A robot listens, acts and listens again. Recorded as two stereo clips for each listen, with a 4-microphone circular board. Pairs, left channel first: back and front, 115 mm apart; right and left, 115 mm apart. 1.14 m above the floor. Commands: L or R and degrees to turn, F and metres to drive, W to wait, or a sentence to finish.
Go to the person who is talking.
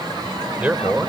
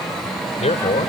R80
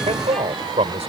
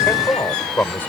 R20
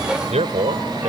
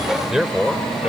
F1.0
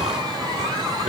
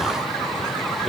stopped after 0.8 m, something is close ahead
W
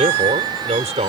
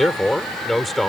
Blocked. The man speaking is further on, straight ahead.